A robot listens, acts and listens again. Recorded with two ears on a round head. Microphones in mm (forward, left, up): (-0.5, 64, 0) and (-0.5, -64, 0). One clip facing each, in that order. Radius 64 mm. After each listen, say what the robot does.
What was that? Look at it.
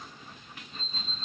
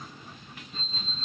Turn 30° right.
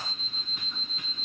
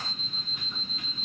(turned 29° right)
Turn 120° right.
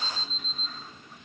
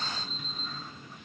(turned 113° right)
Turn 10° right.
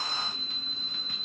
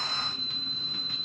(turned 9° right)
Facing the alarm clock.